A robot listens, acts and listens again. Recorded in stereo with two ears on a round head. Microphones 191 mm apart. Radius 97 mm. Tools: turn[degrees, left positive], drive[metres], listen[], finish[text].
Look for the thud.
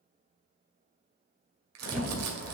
Action: turn[-30]
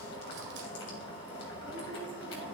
Action: listen[]
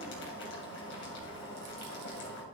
Action: finish[I heard a thud, but can't make it out now. It was about 25° left or 145° right.]